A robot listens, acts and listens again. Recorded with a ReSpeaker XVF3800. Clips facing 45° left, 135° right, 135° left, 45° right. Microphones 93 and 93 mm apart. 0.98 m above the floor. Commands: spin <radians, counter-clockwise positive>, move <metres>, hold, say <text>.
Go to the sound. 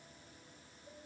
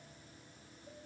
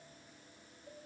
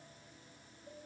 hold
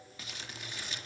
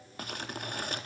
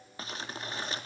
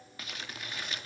spin -2.97
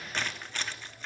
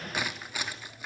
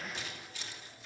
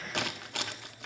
spin -0.96
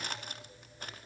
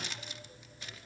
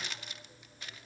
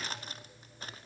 move 1.0
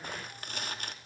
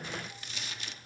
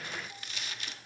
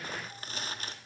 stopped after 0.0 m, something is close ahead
say Something is in my way. I am facing the crumpling but have not reached it.